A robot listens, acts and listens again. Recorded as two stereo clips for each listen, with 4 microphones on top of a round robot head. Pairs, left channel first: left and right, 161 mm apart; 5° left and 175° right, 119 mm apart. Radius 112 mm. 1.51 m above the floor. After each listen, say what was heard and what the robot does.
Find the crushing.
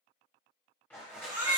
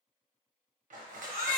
The crushing: 175° left. Turn 175° left.
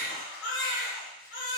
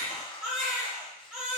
Keep listening.
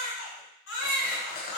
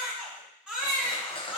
The crushing is now 55° left. Turn 55° left.
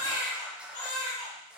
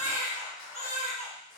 Facing the crushing.